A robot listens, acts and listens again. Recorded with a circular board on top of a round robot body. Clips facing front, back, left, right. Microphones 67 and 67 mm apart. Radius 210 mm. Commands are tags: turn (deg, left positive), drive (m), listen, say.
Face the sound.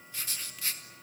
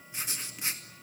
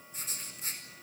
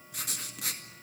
<turn deg="-110"/>
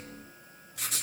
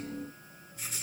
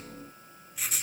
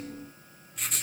<say>Facing the writing, 2 to 4 m away.</say>